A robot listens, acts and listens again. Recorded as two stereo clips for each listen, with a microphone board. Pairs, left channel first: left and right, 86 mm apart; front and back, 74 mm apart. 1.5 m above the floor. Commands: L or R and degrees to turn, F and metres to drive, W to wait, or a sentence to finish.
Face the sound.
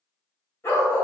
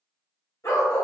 L40
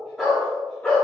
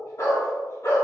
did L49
L20
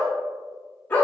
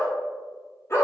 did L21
L30
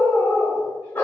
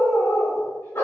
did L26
L35
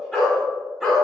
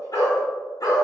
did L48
Found it: a dog barking, straight ahead, 1 to 2 m away.